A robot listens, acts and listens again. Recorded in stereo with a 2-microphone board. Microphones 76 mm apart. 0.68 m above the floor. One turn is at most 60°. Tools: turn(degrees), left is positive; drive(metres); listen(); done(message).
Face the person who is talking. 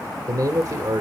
turn(degrees=-55)
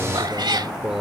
turn(degrees=-10)
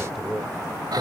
done("Facing the man speaking.")